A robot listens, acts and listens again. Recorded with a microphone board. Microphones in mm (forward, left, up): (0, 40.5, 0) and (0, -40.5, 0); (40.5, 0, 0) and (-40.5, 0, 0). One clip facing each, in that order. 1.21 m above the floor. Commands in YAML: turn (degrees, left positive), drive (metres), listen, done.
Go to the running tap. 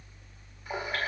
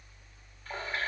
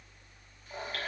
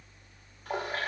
turn: 165
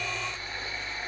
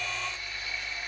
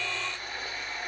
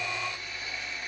turn: 40
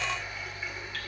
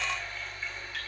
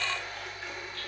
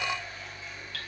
turn: 10
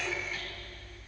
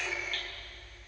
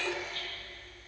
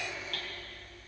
drive: 1.0
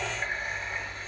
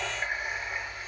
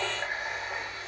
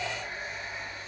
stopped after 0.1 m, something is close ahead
done: "Something is in my way. I am facing the running tap but have not reached it."